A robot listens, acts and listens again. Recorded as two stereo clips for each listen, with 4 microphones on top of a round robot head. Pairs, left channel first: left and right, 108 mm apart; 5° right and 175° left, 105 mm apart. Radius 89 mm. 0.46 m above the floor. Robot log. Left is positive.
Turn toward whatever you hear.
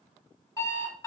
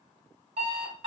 note: The alarm clock: 150° left.
cmd yaw +150
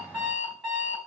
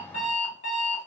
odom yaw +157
end: Found it: an alarm clock, straight ahead, 1 to 2 m away.